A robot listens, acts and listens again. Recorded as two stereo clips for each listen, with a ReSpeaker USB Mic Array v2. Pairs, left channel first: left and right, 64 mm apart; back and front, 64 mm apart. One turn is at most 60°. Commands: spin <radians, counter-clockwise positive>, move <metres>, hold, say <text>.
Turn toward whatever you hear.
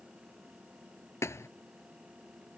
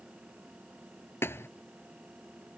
spin 1.05
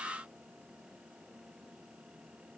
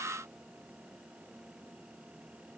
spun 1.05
spin 1.05
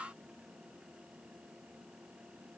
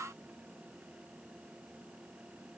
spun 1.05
spin 0.17
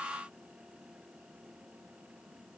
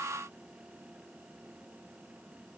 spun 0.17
say Facing where the thud came from. I can't hear it now.